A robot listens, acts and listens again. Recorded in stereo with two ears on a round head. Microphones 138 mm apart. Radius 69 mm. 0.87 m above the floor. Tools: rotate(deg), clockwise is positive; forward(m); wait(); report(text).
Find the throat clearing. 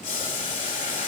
wait()
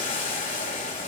wait()
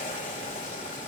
report("I can't make out throat clearing, only boiling.")